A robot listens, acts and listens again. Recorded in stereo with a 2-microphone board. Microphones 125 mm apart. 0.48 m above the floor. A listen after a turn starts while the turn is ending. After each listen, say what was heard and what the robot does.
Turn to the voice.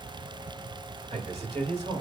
The man speaking: about 60° right or 120° right. Turn 60° right.
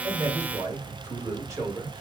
So it is at 30° right. Turn 30° right.
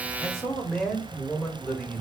The man speaking is now 10° left. Turn 10° left.
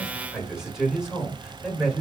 Facing the man speaking.